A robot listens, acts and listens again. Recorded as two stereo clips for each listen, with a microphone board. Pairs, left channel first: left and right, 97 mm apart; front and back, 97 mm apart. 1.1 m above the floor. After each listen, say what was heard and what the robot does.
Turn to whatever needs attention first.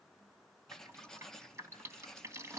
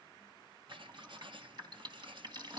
Keep listening.
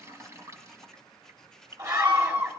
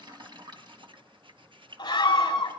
The scream: 45° right. Turn 45° right.
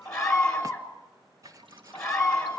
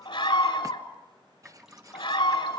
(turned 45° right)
The scream is now 10° left. Turn 10° left.
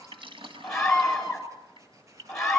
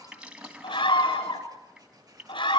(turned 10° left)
Facing the scream.